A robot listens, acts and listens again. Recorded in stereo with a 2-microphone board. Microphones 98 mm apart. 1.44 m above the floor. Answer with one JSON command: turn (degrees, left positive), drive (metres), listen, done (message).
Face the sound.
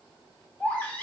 {"turn": 15}
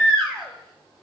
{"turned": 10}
{"done": "Found it: a baby crying, straight ahead."}